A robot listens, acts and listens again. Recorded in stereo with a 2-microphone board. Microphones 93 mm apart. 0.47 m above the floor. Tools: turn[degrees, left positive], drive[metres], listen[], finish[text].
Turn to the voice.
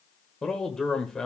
Action: turn[30]
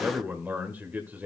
Thought: So it is at 20° right.
Action: turn[-20]
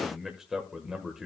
Action: finish[Facing the man speaking, 1 to 2 m away.]